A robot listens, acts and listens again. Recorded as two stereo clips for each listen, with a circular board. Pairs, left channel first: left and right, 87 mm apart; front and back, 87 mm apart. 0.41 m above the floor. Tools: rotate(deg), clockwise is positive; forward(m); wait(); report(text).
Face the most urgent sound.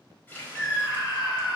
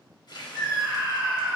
rotate(-110)
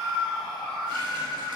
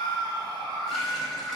report("Facing the scream, 1 to 2 m away.")